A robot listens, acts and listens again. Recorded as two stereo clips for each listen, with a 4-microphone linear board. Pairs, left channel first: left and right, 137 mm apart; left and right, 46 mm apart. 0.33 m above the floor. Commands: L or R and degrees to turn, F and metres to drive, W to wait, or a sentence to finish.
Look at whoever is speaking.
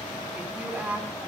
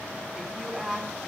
R30
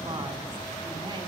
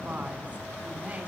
W
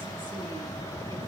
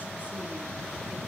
W
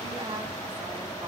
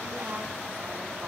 I heard a woman speaking, but can't make it out now. It was about 20° left or 140° right.